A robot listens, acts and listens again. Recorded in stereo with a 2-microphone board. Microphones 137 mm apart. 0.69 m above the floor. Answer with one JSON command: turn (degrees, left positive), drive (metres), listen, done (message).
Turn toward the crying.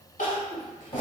{"turn": 70}
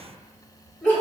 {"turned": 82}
{"turn": 15}
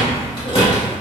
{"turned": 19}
{"listen": true}
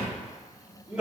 {"done": "Facing the crying."}